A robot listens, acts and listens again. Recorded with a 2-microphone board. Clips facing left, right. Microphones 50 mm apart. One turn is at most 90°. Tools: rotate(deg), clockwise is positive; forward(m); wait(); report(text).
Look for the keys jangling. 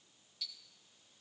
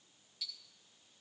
wait()
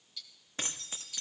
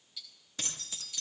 rotate(-35)
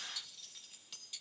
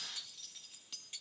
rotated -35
report("Found it: keys jangling, straight ahead.")